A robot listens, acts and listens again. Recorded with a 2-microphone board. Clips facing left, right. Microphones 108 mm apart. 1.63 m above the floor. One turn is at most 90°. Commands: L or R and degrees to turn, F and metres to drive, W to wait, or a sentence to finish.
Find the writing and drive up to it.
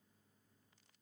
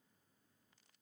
W
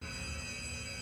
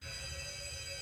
W
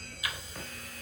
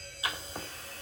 R30
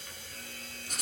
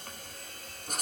R90
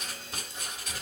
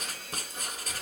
R45
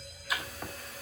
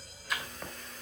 F1.0
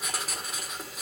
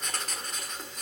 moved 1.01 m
F1.0
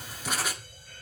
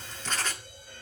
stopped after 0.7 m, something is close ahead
L15
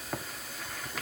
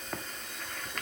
I am next to the writing.